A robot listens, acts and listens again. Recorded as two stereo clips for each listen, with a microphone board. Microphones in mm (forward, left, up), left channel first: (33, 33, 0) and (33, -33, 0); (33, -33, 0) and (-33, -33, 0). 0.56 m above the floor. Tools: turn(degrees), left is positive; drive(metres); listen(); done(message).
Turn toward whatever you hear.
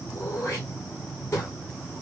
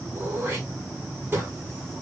turn(degrees=135)
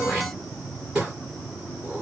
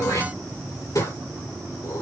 turn(degrees=-10)
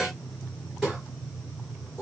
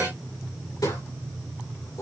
done("Found it: throat clearing, straight ahead, over 4 m away.")